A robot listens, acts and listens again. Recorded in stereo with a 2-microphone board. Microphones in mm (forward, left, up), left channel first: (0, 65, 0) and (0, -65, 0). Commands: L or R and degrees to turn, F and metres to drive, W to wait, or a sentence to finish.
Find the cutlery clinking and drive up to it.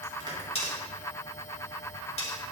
L50
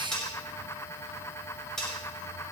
F1.0
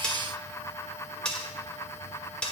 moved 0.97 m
F1.0
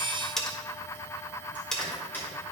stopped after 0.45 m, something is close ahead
I am next to the cutlery clinking.